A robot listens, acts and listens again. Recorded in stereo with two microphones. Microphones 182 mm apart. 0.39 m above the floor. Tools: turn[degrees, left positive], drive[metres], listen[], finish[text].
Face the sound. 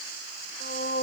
Thought: The singing: about 55° left or 125° left.
Action: turn[55]
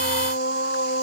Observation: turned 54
Thought: So it is at 75° left.
Action: turn[75]
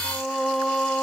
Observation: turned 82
Action: finish[Found it: singing, straight ahead.]